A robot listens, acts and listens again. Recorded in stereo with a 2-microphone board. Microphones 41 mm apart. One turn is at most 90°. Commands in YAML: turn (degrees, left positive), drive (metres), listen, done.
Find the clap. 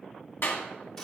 turn: 60
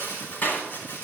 turn: 60
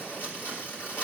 listen: true
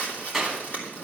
done: "Found it: a clap, straight ahead."